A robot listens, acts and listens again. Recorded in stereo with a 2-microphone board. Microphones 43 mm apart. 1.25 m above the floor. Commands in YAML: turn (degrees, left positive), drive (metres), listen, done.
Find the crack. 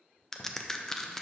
turn: 30
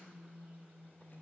listen: true
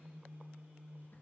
done: "I heard a crack, but can't make it out now. It was about 20° right or 140° left."